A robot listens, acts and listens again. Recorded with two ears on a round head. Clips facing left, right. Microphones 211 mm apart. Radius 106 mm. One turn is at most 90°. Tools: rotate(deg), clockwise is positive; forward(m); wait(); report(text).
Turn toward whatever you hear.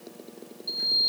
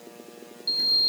rotate(35)
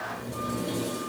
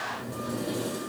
report("Found it: a sliding door, straight ahead.")